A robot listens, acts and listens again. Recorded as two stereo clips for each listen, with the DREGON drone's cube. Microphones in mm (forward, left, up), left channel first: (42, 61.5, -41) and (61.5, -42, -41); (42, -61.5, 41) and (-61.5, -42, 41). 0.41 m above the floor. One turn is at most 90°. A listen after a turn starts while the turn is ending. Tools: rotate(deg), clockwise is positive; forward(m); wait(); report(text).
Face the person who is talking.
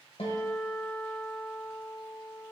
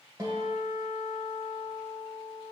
wait()
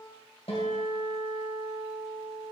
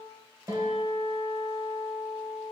wait()
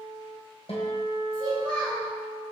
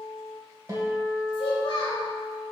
rotate(45)
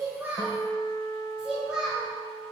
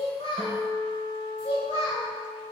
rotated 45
report("Found it: a child speaking, straight ahead.")